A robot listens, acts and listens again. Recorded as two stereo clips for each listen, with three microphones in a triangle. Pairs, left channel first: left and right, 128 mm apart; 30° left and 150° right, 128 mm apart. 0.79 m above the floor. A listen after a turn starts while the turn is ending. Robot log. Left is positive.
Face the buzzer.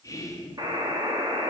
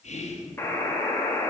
note: The buzzer: 40° right.
cmd yaw -40
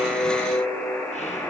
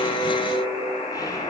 note: The buzzer is now 20° left.
cmd yaw +20
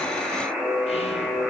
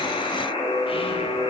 end: Facing the buzzer.